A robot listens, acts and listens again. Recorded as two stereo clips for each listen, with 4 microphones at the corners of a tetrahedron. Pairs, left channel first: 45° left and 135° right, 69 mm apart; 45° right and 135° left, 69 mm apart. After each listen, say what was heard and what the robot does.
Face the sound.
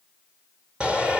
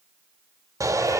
The shout: 150° left. Turn 150° left.
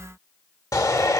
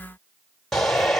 The shout is now 40° left. Turn 40° left.
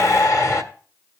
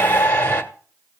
The shout is now 10° left. Turn 10° left.
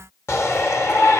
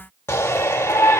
Found it: a shout, straight ahead.